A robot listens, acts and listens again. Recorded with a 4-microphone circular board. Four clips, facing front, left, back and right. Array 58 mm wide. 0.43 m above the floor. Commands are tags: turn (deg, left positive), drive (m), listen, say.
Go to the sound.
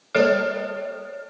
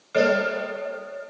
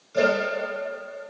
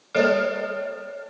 <turn deg="-10"/>
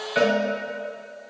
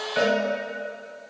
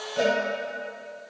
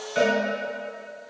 <drive m="1.0"/>
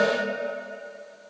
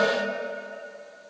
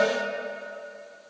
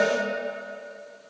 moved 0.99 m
<drive m="1.0"/>
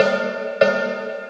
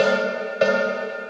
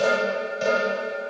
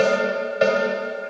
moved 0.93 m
<drive m="1.0"/>
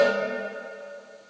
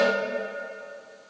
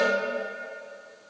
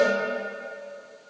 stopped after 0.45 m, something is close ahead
<listen/>
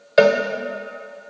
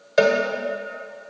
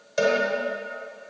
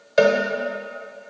<say>Arrived at the cowbell, straight ahead.</say>